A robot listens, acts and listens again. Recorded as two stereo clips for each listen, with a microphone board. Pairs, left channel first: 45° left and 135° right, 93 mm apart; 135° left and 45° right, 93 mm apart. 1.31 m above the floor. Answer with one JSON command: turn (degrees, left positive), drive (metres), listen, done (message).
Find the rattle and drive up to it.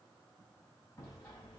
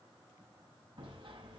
{"listen": true}
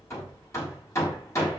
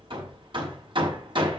{"listen": true}
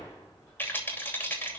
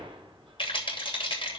{"turn": 115}
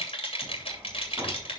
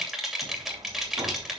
{"turn": 45}
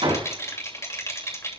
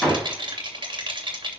{"turn": -10}
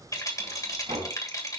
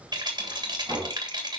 {"drive": 1.0}
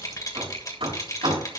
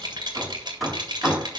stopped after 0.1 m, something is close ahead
{"done": "Blocked. The rattle is further on, straight ahead."}